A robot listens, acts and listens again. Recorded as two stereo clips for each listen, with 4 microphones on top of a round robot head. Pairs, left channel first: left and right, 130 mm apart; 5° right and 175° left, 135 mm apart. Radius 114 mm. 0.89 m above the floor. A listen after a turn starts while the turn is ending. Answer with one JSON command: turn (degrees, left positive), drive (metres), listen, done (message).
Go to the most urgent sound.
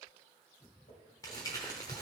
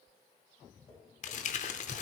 {"listen": true}
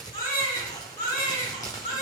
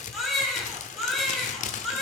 {"turn": 85}
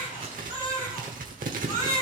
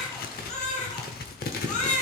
{"turn": 25}
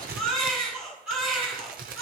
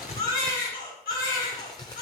{"drive": 1.0}
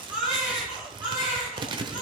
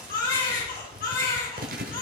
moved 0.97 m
{"turn": -10}
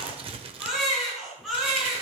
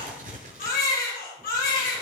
{"drive": 1.0}
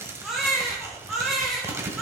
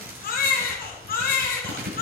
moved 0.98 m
{"drive": 1.0}
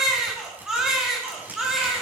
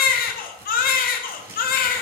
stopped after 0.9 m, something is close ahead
{"done": "I am next to the baby crying."}